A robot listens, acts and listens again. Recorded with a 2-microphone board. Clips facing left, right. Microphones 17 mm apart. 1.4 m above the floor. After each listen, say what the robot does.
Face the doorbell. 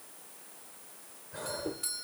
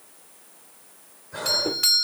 Turn 90° right.
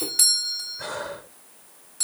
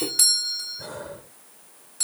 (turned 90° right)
Found it: a doorbell, straight ahead.